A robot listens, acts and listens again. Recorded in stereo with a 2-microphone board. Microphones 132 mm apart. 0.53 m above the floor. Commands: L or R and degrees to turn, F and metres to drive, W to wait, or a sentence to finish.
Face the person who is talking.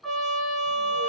W
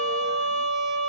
W
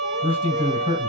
R40
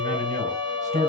R95
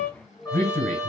L20
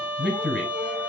Facing the man speaking, 2 to 4 m away.